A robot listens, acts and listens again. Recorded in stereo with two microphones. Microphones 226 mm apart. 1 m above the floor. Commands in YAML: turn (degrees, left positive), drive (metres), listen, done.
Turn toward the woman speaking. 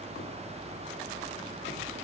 listen: true
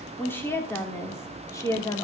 turn: 30
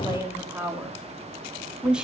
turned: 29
done: "Facing the woman speaking."